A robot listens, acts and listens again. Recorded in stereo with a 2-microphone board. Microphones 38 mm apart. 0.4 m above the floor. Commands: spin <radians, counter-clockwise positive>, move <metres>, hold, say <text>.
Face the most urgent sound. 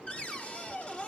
hold
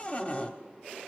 hold
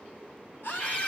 spin 1.13
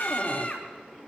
spin 0.70
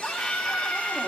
say Found it: a scream, straight ahead.